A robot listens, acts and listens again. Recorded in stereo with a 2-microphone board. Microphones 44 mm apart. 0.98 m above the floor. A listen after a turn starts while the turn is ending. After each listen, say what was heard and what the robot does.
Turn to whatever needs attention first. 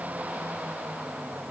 Keep listening.
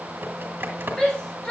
The shout: about 15° left or 165° left. Turn 15° left.
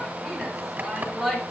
Facing the shout, 2 to 4 m away.